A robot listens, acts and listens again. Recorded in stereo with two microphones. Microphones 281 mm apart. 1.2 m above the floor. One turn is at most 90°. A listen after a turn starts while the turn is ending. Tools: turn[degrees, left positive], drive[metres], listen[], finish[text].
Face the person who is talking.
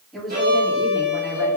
Action: turn[30]
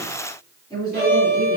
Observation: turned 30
Action: turn[30]
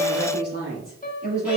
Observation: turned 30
Thought: So it is at 150° left.
Action: turn[90]
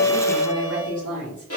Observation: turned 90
Thought: The woman speaking is now 85° left.
Action: turn[85]
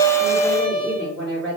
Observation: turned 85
Action: finish[Found it: a woman speaking, straight ahead, 2 to 4 m away.]